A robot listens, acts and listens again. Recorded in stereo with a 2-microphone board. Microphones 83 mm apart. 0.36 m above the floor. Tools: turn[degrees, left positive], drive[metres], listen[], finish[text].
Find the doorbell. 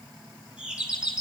Action: turn[-30]
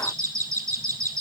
Thought: So it is at 140° right.
Action: turn[-140]
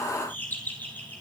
Thought: The doorbell is now 20° left.
Action: turn[20]
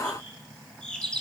Thought: The doorbell is now 10° left.
Action: turn[10]
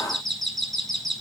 Action: finish[Found it: a doorbell, straight ahead.]